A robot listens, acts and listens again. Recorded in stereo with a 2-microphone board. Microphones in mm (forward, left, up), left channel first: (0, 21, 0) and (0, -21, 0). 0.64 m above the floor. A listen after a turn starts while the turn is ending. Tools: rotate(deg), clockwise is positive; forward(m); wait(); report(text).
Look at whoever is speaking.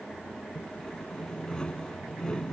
wait()
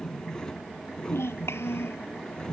rotate(-90)
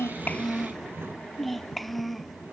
report("Facing the child speaking.")